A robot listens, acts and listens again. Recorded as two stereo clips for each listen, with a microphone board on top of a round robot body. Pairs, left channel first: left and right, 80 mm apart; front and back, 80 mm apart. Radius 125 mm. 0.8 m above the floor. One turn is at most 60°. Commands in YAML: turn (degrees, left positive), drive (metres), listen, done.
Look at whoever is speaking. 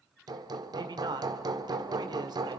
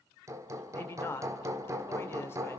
turn: -60
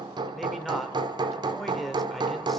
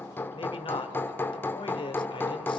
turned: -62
done: "Facing the man speaking."